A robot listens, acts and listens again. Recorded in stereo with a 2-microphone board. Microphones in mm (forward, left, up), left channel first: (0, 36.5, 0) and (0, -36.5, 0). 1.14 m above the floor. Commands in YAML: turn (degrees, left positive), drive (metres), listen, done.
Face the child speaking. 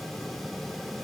listen: true
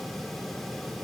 listen: true
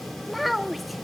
turn: 30
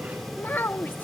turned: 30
turn: 150
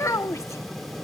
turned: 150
turn: 50
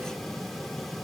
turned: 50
listen: true
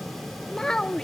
turn: 10
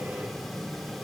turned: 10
listen: true
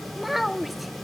done: "Facing the child speaking."